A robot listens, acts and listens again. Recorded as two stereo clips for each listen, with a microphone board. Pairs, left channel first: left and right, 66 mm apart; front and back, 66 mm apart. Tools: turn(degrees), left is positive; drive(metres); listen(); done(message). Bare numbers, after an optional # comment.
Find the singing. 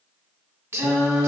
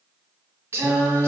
# The singing: 125° right.
turn(-125)
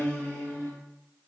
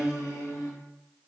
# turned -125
# The singing is now 35° left.
turn(35)
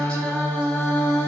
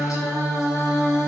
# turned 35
# The singing is now 35° left.
turn(35)
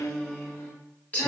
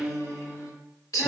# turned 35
# The singing is now 25° left.
turn(25)
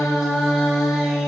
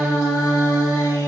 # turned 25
# The singing is now 10° right.
turn(-10)
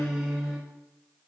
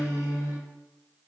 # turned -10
done("Found it: singing, straight ahead, 1 to 2 m away.")